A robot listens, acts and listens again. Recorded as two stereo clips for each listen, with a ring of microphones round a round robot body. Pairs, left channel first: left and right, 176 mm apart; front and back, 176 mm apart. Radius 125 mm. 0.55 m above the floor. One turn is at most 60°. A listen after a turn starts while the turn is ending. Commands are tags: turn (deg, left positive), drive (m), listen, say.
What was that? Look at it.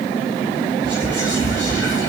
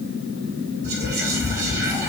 <turn deg="-60"/>
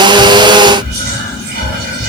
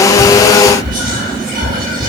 <turn deg="-60"/>
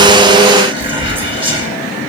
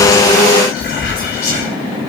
<turn deg="-35"/>
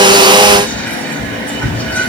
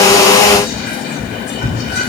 <turn deg="10"/>
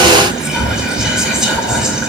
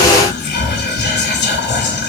<say>Facing the whispering, 2 to 4 m away.</say>